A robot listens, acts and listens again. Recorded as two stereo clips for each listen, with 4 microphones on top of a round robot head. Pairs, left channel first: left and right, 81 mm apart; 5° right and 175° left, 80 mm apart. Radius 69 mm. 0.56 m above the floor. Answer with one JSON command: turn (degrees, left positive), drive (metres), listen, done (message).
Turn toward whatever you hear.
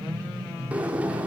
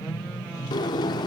{"turn": -20}
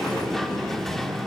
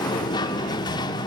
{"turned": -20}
{"done": "Facing the sliding door."}